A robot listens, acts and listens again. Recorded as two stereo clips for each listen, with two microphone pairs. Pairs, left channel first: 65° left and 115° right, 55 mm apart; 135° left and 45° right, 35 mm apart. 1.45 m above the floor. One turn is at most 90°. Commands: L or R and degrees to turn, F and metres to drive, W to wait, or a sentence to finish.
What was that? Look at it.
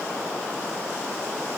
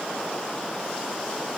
W
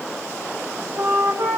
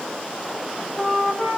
R90
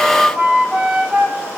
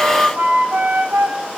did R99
R45
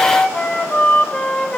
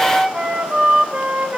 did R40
Facing the flute, 1 to 2 m away.